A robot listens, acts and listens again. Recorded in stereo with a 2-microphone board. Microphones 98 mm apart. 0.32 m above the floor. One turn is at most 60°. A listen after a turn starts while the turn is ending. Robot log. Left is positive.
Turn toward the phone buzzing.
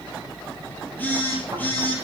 note: The phone buzzing: about 20° left or 160° left.
cmd yaw +20
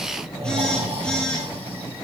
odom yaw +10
cmd idle
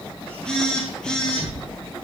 note: So it is at 10° left.
cmd yaw +10
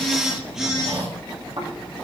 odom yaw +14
end: Found it: a phone buzzing, straight ahead, over 4 m away.